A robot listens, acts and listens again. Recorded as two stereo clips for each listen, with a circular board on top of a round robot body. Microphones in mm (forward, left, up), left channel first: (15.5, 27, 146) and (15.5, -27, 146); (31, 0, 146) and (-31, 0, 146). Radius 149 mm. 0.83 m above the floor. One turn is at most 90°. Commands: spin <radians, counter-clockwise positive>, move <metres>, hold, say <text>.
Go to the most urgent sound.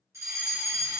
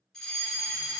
spin -1.40
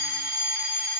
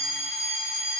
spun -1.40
spin -0.44
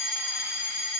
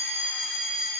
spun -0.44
spin -0.35
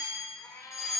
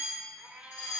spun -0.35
move 1.0
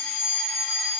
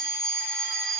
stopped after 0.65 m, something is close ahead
say Blocked. The fire alarm is further on, straight ahead.